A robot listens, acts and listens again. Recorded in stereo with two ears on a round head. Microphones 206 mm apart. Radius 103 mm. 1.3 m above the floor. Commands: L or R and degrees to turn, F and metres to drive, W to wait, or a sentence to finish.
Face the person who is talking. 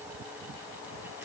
W
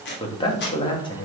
L20
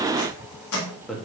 Found it: a man speaking, straight ahead.